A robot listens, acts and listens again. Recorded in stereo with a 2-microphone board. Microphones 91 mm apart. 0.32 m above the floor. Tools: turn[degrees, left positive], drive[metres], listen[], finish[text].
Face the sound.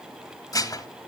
Thought: The dishes clattering: about 40° left or 140° left.
Action: turn[40]
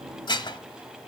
Thought: So it is at 90° left.
Action: turn[90]
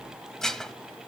Action: finish[Facing the dishes clattering.]